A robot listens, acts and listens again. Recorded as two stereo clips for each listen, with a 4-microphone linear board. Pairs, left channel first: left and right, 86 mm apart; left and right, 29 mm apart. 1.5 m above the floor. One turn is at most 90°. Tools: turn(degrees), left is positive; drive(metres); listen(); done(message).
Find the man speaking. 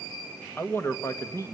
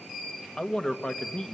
turn(degrees=40)
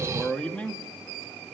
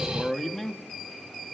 turn(degrees=15)
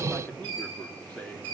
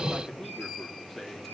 turn(degrees=15)
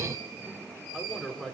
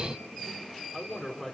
done("Facing the man speaking, over 4 m away.")